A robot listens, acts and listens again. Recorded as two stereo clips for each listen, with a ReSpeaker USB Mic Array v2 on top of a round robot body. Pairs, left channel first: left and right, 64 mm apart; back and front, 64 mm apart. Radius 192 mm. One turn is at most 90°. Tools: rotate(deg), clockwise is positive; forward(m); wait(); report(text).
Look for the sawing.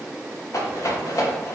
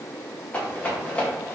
wait()
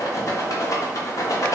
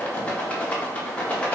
wait()
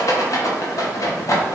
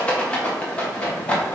report("I can't make out sawing to turn to.")